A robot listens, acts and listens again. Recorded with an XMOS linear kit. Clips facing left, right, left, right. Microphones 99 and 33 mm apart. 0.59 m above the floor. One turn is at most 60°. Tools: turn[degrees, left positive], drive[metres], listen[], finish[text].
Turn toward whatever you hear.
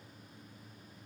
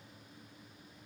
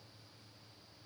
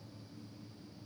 Action: listen[]
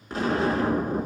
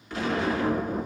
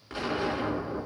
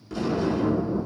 Thought: The explosion: about 35° left or 145° left.
Action: turn[35]
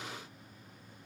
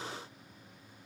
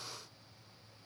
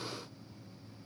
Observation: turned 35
Action: listen[]
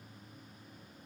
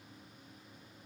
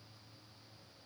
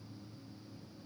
Action: finish[I heard an explosion, but can't make it out now. It was about straight ahead or 110° left.]